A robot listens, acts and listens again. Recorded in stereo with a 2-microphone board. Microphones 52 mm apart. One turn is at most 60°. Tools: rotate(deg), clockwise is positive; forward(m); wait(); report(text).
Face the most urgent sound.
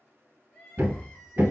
rotate(-30)
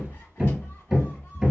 wait()
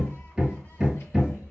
wait()
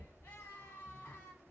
rotate(-60)
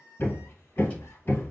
rotate(-60)
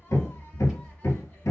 rotate(-25)
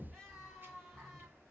report("Found it: crying, straight ahead, 1 to 2 m away.")